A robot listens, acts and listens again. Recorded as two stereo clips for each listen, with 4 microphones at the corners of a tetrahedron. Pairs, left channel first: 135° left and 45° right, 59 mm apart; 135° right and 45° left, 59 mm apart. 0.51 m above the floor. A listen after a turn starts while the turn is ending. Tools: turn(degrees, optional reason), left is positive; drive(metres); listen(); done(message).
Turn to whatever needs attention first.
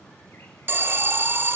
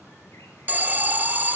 done("Facing the alarm, under 1 m away.")